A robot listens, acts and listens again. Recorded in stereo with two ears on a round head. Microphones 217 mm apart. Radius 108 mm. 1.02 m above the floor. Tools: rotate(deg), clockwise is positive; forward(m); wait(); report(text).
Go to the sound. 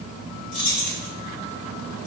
rotate(-90)
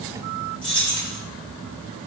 forward(1.0)
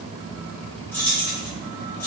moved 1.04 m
forward(1.0)
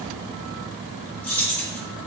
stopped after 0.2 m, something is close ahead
report("I am next to the keys jangling.")